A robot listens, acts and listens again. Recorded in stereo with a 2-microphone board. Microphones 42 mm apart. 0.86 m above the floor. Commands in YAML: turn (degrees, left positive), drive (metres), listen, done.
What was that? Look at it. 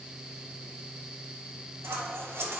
turn: -90
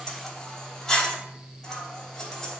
done: "Facing the scissors, 2 to 4 m away."